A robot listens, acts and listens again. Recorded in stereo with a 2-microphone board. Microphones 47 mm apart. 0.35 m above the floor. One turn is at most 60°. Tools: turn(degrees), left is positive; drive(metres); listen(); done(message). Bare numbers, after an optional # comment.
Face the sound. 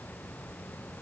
listen()
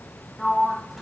turn(30)
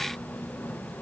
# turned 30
# So it is at 150° left.
turn(60)
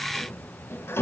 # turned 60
# The sliding door is now 90° left.
turn(60)
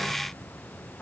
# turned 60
# The sliding door is now 30° left.
turn(30)
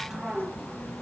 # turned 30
done("Found it: a sliding door, straight ahead, 1 to 2 m away.")